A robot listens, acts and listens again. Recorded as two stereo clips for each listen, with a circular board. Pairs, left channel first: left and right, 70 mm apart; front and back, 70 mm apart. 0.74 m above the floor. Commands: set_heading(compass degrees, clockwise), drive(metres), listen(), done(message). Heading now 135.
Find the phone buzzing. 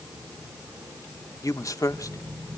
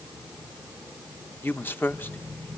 set_heading(155)
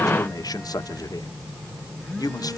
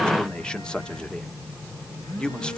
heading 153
done("Found it: a phone buzzing, straight ahead, 2 to 4 m away.")